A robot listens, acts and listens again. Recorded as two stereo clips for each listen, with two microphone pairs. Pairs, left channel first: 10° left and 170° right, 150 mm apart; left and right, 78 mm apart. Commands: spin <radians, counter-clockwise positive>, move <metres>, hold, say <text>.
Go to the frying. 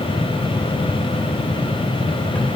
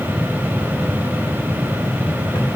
hold
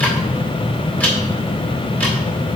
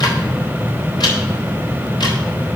hold
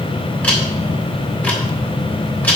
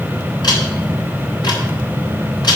say I can't make out frying to turn to.